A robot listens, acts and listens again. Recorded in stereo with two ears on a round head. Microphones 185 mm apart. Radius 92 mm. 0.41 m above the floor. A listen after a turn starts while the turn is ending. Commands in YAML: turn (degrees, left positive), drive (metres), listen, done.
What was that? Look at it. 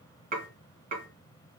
turn: -40
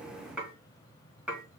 done: "Found it: dishes clattering, straight ahead, 1 to 2 m away."